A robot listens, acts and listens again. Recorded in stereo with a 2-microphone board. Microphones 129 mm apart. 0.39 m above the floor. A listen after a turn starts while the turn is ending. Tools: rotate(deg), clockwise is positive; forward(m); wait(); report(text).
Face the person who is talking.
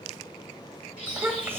rotate(15)
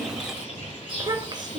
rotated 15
rotate(35)
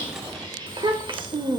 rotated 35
rotate(35)
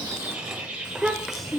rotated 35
report("Found it: a child speaking, straight ahead.")